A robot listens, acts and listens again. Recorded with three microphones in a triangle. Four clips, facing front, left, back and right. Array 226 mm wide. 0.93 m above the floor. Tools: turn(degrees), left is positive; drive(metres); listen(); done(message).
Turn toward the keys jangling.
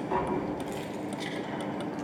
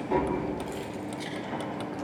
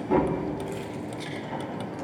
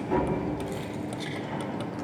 turn(degrees=-35)
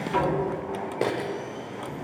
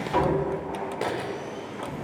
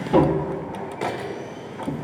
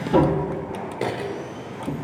turn(degrees=-15)
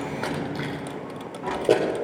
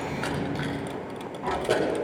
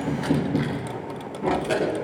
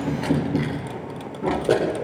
turn(degrees=-35)
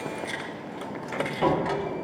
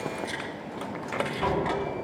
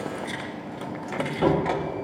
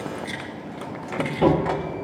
turn(degrees=-15)
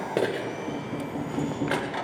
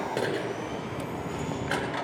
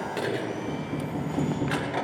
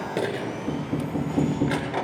done("Found it: keys jangling, straight ahead, 2 to 4 m away.")